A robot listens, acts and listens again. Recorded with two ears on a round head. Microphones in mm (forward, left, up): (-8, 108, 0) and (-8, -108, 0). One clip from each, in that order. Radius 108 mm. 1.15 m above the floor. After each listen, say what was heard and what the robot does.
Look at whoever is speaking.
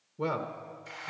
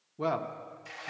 The man speaking: about 20° right or 160° right. Turn 20° right.
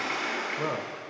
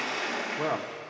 So it is at 135° right. Turn 135° right.
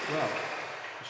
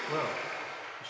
The man speaking is now 15° left. Turn 15° left.
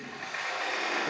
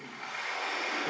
Keep listening.
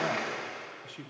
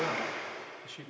Found it: a man speaking, straight ahead, under 1 m away.